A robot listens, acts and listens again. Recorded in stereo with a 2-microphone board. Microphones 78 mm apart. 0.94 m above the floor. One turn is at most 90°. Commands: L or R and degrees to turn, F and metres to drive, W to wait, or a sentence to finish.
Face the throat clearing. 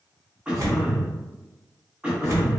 R30
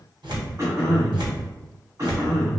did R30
R90
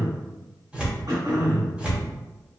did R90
R55
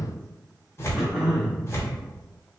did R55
Found it: throat clearing, straight ahead, under 1 m away.